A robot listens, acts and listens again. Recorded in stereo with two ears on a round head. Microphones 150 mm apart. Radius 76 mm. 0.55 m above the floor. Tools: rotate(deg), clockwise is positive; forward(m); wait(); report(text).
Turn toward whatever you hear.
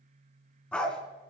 rotate(-30)
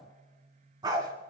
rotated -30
rotate(25)
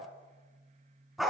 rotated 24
report("Facing the dog barking, 2 to 4 m away.")